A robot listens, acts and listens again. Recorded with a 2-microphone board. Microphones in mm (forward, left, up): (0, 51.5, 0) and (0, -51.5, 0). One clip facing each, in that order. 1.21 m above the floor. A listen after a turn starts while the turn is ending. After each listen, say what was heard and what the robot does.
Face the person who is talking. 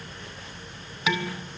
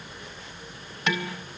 Keep listening.
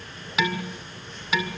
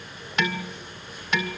Keep listening.
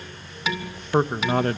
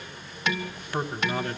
The man speaking: about 55° left or 125° left. Turn 55° left.
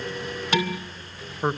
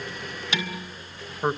Found it: a man speaking, straight ahead.